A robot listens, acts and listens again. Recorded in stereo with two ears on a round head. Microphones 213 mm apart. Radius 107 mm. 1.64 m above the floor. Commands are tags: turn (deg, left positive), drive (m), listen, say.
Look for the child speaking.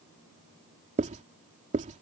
<listen/>
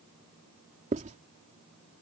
<listen/>
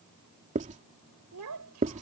<turn deg="-75"/>
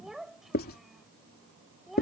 <say>Found it: a child speaking, straight ahead.</say>